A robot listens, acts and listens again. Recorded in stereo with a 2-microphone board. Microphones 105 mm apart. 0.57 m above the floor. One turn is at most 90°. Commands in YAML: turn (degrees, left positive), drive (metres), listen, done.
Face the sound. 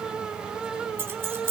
turn: -25
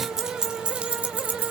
turn: -15
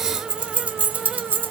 turn: -20
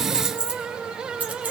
turn: -15
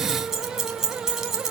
done: "Found it: keys jangling, straight ahead, 2 to 4 m away."